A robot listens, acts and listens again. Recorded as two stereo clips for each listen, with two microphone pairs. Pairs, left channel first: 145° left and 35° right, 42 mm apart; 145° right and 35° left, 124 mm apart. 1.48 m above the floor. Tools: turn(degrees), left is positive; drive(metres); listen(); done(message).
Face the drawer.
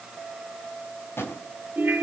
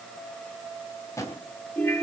turn(degrees=150)
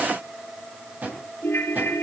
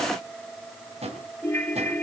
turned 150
turn(degrees=10)
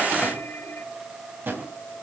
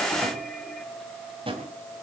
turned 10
done("Facing the drawer, 2 to 4 m away.")